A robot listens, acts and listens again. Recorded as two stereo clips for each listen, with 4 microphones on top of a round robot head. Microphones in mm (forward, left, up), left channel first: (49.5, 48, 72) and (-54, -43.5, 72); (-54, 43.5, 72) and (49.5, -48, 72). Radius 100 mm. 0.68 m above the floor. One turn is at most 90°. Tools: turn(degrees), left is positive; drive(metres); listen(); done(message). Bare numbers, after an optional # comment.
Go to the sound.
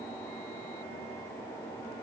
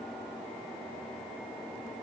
listen()
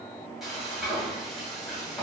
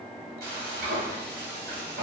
# The frying: 50° right.
turn(-50)
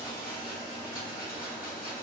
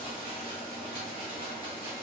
# The frying is now 15° left.
turn(15)
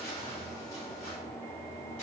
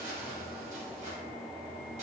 drive(1.0)
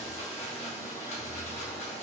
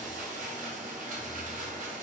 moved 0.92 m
drive(1.0)
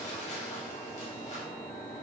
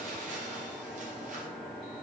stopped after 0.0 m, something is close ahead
done("I am next to the frying.")